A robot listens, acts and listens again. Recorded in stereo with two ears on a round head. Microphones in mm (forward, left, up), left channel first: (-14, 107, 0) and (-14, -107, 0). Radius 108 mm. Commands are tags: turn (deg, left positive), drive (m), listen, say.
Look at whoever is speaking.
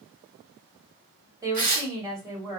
<turn deg="-30"/>
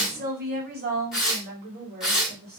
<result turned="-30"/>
<turn deg="-135"/>
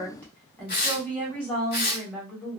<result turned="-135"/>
<say>Found it: a woman speaking, straight ahead, 1 to 2 m away.</say>